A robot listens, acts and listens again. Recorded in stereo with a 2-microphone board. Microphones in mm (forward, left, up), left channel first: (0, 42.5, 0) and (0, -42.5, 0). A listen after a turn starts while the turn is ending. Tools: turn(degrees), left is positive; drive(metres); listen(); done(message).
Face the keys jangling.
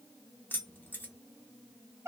turn(degrees=20)
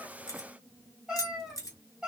turn(degrees=135)
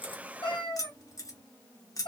turn(degrees=45)
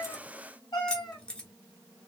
turn(degrees=10)
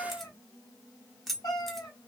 done("Facing the keys jangling, under 1 m away.")